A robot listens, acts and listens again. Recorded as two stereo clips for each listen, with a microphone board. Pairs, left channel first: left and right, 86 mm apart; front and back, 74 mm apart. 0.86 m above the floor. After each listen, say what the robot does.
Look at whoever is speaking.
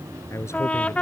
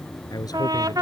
Turn 30° left.
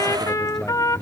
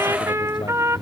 Keep listening.
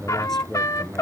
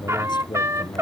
Found it: a man speaking, straight ahead.